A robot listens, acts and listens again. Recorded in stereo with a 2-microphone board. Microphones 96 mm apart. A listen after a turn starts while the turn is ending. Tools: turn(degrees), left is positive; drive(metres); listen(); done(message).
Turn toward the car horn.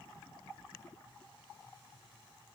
listen()
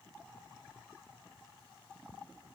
listen()
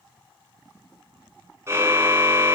turn(degrees=-30)
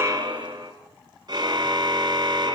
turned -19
turn(degrees=-130)
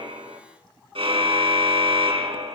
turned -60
turn(degrees=-70)
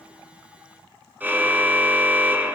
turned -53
turn(degrees=-15)
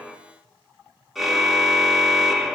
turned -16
done("Facing the car horn.")